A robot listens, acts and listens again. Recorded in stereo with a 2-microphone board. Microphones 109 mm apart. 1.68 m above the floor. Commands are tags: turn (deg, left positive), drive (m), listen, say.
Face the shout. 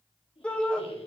<turn deg="30"/>
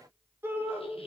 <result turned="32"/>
<turn deg="-20"/>
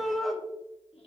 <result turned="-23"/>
<say>Facing the shout, 2 to 4 m away.</say>